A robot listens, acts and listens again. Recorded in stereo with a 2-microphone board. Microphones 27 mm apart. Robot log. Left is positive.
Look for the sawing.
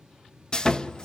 note: The sawing: about 30° left or 150° left.
cmd yaw +30
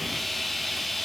end: Facing the sawing, under 1 m away.